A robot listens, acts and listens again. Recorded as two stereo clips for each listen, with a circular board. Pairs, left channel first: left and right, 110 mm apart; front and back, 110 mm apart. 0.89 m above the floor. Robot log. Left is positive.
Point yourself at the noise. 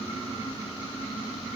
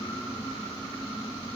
cmd idle
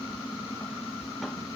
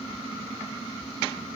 cmd idle
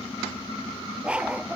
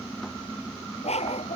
note: The dog barking: 10° right.
cmd yaw -10
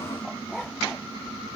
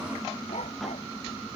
end: Found it: a dog barking, straight ahead.